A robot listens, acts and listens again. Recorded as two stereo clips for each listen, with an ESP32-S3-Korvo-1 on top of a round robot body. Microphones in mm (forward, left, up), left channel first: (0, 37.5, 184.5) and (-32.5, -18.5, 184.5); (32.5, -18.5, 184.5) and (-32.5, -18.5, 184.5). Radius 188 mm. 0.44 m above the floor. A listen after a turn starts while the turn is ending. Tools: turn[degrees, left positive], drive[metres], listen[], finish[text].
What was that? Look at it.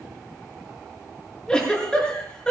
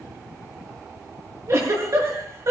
Thought: The giggle: 135° left.
Action: turn[135]
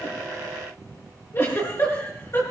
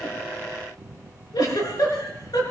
Thought: The giggle is now 10° left.
Action: turn[10]
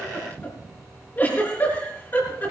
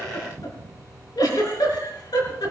Action: finish[Facing the giggle, over 4 m away.]